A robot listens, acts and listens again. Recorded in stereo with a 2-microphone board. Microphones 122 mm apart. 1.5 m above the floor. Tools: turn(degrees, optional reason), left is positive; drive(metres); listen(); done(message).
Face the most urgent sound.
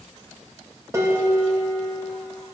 listen()
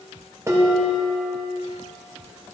listen()
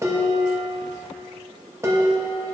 done("I can't make out anything urgent, only dishes clattering.")